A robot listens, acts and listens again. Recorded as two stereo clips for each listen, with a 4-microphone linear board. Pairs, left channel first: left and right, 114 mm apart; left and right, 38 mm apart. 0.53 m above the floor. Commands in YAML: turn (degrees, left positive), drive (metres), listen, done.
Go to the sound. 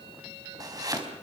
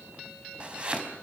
turn: -30
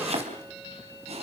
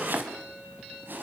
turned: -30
turn: -120
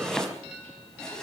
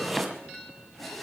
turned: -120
drive: 1.0
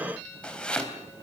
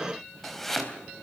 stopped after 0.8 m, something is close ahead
turn: 10
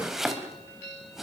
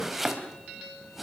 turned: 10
done: "Blocked. The chopping is further on, straight ahead."